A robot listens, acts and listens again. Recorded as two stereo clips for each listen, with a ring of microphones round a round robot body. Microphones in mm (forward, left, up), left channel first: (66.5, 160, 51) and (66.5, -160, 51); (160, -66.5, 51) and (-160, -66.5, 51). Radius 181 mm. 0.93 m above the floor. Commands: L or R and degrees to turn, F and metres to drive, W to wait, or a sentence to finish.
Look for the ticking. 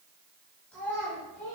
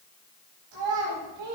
W
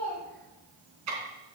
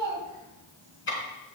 R55
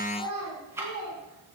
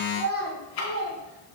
R10
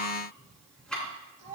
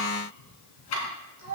Facing the ticking.